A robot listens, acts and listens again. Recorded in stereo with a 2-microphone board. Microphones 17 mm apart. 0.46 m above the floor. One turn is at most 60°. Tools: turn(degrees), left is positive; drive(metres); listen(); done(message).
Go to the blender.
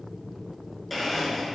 turn(degrees=30)
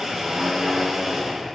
turn(degrees=-25)
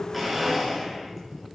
drive(metres=1.0)
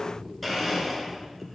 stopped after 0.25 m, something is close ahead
done("Blocked. The blender is further on, straight ahead.")